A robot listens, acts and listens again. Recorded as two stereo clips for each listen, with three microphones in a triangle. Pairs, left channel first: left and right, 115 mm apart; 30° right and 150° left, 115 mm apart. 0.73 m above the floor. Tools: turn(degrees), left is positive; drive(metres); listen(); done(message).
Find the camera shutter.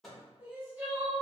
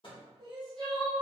listen()
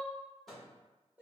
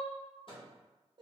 listen()
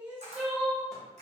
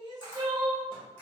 turn(degrees=-100)
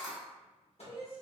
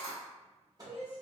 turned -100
done("Found it: a camera shutter, straight ahead, 1 to 2 m away.")